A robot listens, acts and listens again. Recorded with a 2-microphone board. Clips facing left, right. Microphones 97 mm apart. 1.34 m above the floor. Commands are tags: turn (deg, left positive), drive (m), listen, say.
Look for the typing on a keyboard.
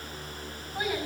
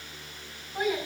<listen/>
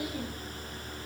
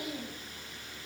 <listen/>
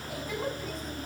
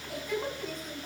<say>I can't make out typing on a keyboard to turn to.</say>